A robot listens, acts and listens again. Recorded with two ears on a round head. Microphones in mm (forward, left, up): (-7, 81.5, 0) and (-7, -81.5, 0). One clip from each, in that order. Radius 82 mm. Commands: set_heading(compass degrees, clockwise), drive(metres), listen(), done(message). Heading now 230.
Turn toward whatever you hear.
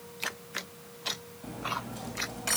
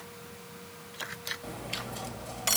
set_heading(270)
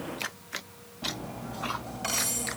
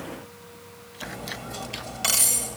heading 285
set_heading(5)
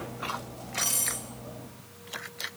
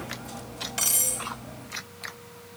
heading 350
set_heading(5)
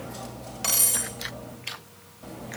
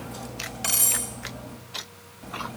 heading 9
done("Facing the cutlery clinking.")